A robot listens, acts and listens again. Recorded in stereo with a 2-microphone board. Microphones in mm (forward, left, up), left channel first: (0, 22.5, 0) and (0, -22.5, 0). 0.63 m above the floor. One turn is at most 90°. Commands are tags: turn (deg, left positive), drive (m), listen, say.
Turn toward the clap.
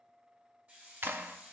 <turn deg="-50"/>
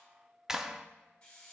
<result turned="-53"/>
<turn deg="-10"/>
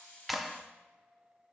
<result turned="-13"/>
<say>Facing the clap.</say>